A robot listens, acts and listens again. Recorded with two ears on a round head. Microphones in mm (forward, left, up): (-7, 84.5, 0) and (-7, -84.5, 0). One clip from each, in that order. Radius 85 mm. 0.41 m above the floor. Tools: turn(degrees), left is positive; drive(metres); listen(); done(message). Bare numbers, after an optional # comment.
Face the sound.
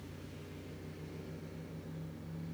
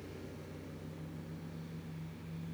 listen()
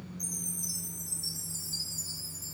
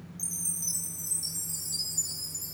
# The chime: about 65° right or 115° right.
turn(-65)
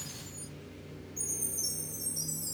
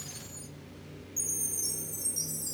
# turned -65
# So it is at 20° right.
turn(-20)
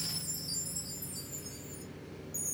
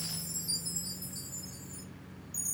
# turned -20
done("Found it: a chime, straight ahead.")